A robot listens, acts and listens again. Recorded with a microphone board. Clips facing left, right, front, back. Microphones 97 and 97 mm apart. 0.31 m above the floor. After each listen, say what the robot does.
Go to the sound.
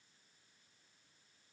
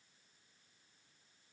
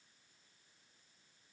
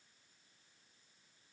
Keep listening.
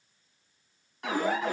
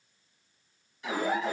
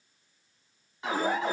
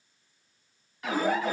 Turn 65° left.
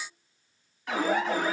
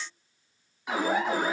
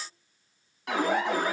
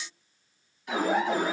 Turn 15° right.
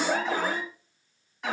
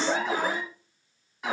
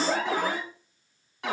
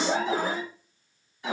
Drive 1.0 m forward.
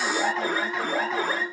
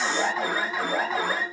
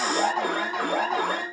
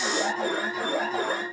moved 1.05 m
Drive 1.0 m forward.
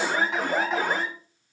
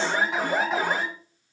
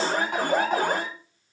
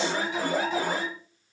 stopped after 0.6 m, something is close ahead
I am next to the alarm.